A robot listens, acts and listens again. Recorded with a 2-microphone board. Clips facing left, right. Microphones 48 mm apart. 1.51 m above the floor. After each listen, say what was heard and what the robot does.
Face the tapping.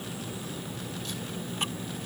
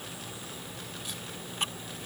Keep listening.
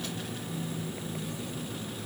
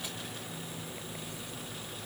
Keep listening.
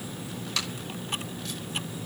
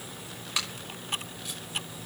I can't make out tapping.